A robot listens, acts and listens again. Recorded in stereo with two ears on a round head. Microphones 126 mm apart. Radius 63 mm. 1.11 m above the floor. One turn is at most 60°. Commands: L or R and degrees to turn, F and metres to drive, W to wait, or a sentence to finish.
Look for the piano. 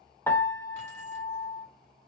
L20
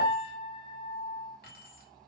L60
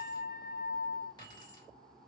L60
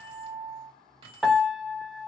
Found it: a piano, straight ahead.